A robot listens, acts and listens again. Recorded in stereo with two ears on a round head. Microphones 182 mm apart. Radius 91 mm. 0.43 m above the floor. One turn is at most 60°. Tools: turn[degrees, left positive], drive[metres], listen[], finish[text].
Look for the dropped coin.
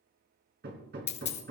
Thought: The dropped coin: about 35° left or 145° left.
Action: turn[35]
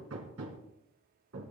Action: listen[]
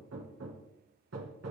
Action: finish[I heard a dropped coin, but can't make it out now. It was about straight ahead or 110° left.]